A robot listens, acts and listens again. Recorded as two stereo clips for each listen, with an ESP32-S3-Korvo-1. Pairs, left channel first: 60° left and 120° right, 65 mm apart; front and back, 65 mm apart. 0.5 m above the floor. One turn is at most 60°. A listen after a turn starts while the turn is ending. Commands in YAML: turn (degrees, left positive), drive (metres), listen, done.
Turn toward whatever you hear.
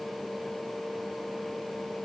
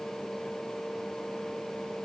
listen: true
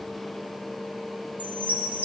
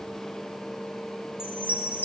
turn: -55
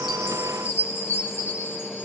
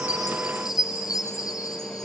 done: "Facing the chime, over 4 m away."